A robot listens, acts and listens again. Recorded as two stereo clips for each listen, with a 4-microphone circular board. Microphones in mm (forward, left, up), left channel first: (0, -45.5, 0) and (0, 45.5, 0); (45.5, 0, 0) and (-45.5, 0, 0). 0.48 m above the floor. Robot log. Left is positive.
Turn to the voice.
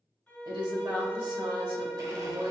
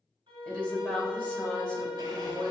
note: The woman speaking: 70° left.
cmd yaw +70
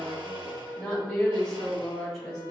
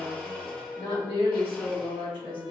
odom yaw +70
end: Found it: a woman speaking, straight ahead, 2 to 4 m away.